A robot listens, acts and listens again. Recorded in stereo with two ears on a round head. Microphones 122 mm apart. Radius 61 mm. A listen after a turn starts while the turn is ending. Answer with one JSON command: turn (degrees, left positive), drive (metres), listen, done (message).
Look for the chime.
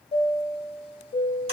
{"turn": 40}
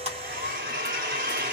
{"listen": true}
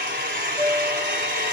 {"done": "Found it: a chime, straight ahead, under 1 m away."}